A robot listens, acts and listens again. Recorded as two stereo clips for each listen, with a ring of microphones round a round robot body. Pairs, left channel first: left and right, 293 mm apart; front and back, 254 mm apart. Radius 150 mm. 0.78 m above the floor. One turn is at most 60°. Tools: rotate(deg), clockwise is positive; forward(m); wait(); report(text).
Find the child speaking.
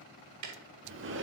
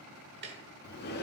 wait()
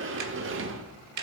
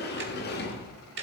wait()
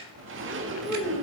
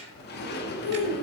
report("Found it: a child speaking, straight ahead.")